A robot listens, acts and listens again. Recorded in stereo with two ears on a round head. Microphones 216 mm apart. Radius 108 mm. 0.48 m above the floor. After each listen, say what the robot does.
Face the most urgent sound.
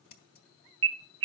Turn 55° right.
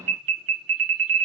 Turn 65° right.
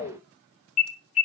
Turn 25° left.
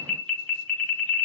Facing the alarm.